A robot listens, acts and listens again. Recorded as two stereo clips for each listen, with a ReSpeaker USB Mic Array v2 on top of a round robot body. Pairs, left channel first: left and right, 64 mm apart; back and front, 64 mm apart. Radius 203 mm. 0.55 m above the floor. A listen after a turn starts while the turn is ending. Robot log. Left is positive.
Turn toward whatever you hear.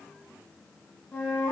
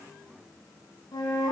note: The flute: 165° left.
cmd yaw +165
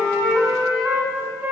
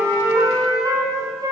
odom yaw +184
note: The flute is now 15° right.
cmd yaw -15
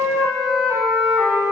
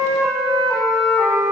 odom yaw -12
end: Found it: a flute, straight ahead, 1 to 2 m away.